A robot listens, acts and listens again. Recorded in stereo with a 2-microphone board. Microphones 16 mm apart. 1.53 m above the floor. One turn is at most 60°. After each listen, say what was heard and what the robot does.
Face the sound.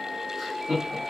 The laughter: about 35° right or 145° right. Turn 35° right.
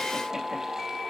Keep listening.
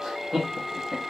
The laughter: about 40° right or 140° right. Turn 40° right.
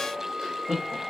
So it is at 120° right. Turn 60° right.
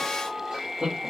The laughter is now 75° right. Turn 60° right.
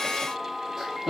The laughter is now 20° right. Turn 20° right.
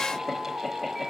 Keep listening.
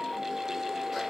Keep listening.
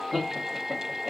Found it: laughter, straight ahead, 1 to 2 m away.